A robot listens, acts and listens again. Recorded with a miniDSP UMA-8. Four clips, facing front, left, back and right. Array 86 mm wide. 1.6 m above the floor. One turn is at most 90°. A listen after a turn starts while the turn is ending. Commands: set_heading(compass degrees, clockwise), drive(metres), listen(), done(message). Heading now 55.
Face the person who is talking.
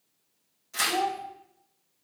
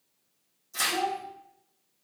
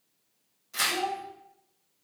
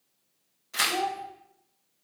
set_heading(100)
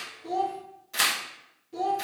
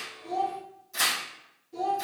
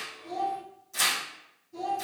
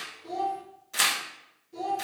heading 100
done("Found it: a child speaking, straight ahead.")